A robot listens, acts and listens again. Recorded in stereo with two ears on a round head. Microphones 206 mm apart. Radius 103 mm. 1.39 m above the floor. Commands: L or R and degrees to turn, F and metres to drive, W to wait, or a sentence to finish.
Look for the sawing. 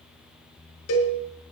W
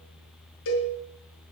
W
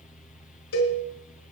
I can't make out sawing to turn to.